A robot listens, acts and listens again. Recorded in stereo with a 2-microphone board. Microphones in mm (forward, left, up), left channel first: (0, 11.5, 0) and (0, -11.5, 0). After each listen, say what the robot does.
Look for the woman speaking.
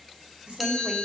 Turn 50° right.
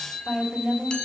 Turn 80° right.
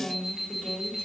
Turn 20° left.
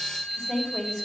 Facing the woman speaking, 2 to 4 m away.